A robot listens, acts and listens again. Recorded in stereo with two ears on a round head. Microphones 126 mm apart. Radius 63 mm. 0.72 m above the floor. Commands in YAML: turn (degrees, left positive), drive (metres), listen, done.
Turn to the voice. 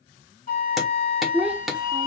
turn: -30
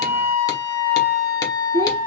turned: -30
turn: -145
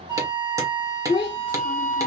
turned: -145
turn: 35
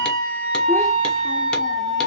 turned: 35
listen: true
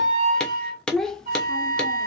done: "Facing the child speaking."